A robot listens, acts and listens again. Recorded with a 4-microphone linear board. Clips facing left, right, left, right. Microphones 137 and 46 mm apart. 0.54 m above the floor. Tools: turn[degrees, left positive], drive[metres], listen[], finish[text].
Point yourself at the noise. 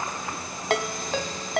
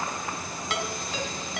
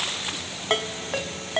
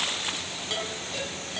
Thought: The ringtone: about 50° left or 130° left.
Action: turn[50]
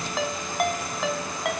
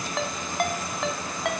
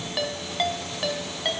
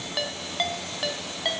Action: finish[Facing the ringtone.]